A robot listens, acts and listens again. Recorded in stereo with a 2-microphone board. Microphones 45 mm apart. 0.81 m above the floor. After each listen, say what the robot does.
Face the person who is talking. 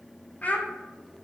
Turn 35° left.
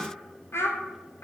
Turn 110° left.
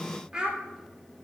Turn 20° right.
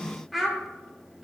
Found it: a child speaking, straight ahead.